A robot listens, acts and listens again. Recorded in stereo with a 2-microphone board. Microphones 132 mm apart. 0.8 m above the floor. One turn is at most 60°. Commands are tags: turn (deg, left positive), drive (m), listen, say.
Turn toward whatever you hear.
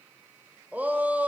<turn deg="-30"/>
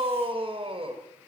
<turn deg="-60"/>
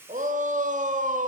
<turn deg="-60"/>
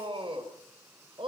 <turn deg="-40"/>
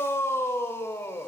<turn deg="20"/>
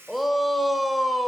<say>Facing the shout.</say>